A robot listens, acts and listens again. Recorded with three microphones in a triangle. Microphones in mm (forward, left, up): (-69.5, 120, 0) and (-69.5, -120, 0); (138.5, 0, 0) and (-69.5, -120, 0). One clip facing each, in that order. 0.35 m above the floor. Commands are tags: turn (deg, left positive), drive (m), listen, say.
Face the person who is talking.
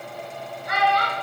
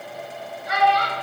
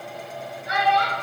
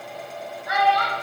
<turn deg="90"/>
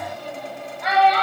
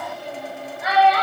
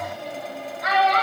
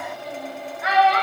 <turn deg="-10"/>
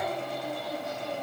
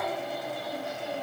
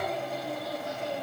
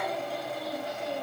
<listen/>
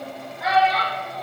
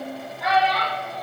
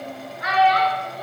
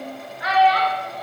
<say>Facing the child speaking, under 1 m away.</say>